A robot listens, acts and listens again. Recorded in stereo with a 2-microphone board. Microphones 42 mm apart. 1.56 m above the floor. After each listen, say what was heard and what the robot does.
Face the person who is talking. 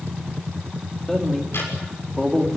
Turn 30° left.
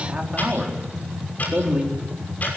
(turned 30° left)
So it is at 20° right. Turn 20° right.
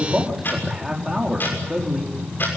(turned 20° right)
The man speaking is now 10° right. Turn 10° right.
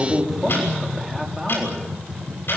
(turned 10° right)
Found it: a man speaking, straight ahead, over 4 m away.